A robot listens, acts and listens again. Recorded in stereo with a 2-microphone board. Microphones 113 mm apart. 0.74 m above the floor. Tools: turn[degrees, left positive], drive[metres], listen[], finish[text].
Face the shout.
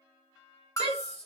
Thought: The shout: about 75° right or 105° right.
Action: turn[-75]
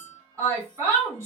Thought: So it is at 25° right.
Action: turn[-25]
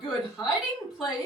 Action: finish[Facing the shout, 2 to 4 m away.]